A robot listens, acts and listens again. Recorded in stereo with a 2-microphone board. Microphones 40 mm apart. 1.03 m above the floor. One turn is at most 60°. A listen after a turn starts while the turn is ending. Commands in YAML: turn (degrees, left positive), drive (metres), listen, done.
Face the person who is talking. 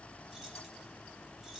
listen: true
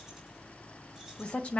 turn: 35
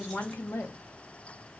turn: 60
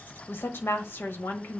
turn: 60
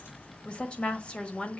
turn: 25
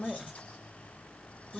done: "Found it: a woman speaking, straight ahead."